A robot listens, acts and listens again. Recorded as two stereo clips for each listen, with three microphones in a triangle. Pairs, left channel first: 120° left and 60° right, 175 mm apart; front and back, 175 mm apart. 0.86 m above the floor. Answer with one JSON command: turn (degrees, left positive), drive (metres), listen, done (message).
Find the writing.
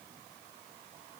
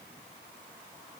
{"listen": true}
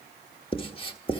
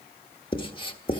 {"turn": 60}
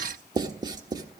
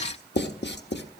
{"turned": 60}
{"turn": 10}
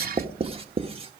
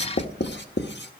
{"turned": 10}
{"done": "Facing the writing."}